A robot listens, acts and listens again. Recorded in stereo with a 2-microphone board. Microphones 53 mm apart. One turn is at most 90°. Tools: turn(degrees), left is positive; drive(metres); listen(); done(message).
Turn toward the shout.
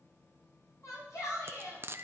turn(degrees=90)
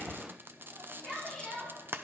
done("Found it: a shout, straight ahead.")